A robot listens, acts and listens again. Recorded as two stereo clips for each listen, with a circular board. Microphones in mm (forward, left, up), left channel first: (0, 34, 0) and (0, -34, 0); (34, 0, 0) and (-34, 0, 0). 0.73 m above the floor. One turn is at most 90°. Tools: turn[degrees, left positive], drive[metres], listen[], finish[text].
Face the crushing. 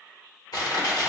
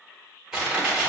Thought: The crushing: 100° left.
Action: turn[90]
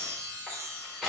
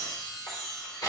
Thought: The crushing is now 10° right.
Action: turn[-10]
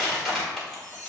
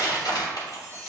Action: finish[Facing the crushing.]